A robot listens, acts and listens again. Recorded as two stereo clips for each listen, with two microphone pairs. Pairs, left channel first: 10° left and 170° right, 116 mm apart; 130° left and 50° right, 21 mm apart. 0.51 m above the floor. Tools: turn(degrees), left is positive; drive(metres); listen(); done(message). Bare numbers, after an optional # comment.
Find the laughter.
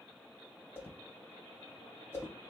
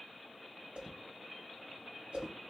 listen()
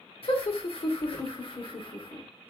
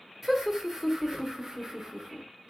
# The laughter: 10° right.
turn(-10)
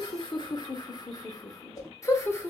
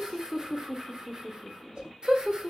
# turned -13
# The laughter is now 50° right.
turn(-50)
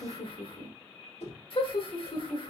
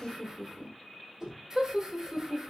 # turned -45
# The laughter is now 10° right.
turn(-10)
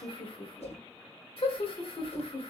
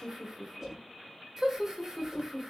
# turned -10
done("Facing the laughter, 1 to 2 m away.")